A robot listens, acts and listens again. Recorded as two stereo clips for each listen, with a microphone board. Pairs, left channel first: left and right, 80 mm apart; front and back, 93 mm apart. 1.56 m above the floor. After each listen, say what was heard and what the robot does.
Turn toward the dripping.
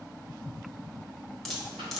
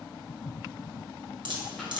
The dripping: 175° left. Turn 175° left.
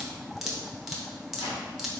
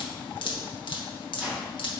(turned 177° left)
Facing the dripping.